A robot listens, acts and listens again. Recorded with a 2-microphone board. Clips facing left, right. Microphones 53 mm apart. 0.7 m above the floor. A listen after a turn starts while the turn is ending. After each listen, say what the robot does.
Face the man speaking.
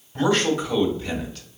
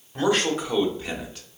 Turn 20° right.
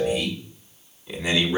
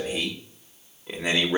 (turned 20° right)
Turn 130° right.
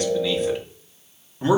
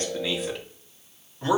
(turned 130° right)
Turn 25° left.
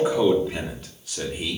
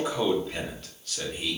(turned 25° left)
Turn 20° left.
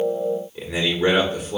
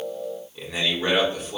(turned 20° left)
Turn 10° left.
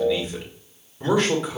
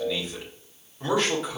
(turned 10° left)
Facing the man speaking.